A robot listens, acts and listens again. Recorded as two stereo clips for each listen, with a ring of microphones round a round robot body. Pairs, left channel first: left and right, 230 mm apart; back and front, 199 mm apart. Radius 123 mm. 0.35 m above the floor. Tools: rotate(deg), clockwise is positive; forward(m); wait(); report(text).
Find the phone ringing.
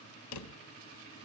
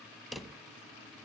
wait()
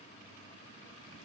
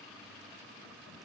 wait()
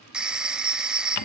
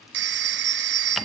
report("Found it: a phone ringing, straight ahead, 1 to 2 m away.")